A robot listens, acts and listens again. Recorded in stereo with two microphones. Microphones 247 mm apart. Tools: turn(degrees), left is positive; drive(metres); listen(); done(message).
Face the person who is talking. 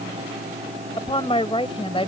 turn(degrees=25)
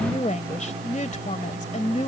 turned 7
turn(degrees=30)
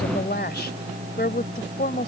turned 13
turn(degrees=135)
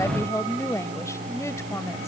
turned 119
turn(degrees=15)
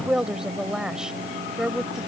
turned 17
done("Facing the woman speaking.")